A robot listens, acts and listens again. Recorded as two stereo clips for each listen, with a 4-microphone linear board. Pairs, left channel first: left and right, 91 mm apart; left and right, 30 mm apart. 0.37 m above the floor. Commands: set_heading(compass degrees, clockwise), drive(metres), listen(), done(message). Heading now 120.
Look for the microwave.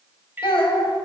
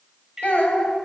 set_heading(140)
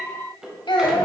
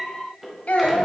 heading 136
done("Facing the microwave.")